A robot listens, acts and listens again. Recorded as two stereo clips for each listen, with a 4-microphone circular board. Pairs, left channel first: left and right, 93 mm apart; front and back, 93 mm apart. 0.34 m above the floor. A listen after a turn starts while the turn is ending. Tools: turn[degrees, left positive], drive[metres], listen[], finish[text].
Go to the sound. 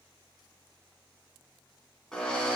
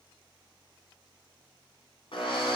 Action: drive[1.0]
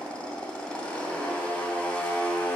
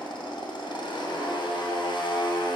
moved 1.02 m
Thought: The drill is now 10° left.
Action: turn[10]
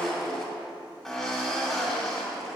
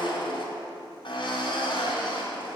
Action: drive[1.0]
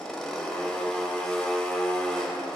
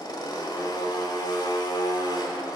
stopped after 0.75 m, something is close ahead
Thought: The drill is now 10° left.
Action: turn[10]
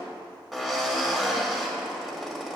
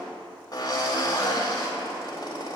Action: finish[I am next to the drill.]